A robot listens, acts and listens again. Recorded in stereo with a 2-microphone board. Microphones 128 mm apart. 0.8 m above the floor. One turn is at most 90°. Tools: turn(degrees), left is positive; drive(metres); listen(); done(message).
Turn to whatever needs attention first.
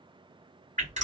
listen()
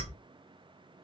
listen()
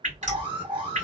turn(degrees=-40)
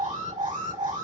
turn(degrees=-90)
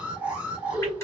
turn(degrees=-10)
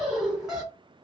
done("Found it: an alarm, straight ahead.")